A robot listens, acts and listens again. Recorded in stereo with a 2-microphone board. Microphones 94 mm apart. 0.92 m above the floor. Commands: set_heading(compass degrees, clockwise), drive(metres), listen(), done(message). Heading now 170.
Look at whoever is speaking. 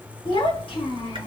set_heading(80)
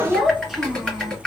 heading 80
done("Facing the child speaking.")